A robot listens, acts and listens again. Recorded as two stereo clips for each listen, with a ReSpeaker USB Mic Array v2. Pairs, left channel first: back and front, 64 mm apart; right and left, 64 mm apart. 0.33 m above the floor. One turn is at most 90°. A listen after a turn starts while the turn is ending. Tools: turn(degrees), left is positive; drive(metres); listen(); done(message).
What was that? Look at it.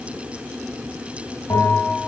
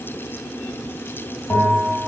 turn(degrees=-90)
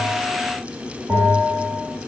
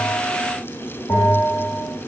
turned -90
turn(degrees=-50)
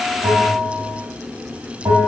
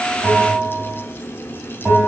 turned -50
done("Found it: a bell, straight ahead.")